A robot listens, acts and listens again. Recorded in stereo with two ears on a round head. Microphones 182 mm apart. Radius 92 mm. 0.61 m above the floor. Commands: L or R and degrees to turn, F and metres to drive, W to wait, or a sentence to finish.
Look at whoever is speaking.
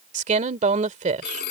R35
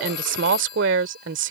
R105
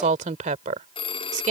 R40
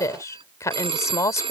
L15
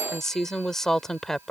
Facing the woman speaking.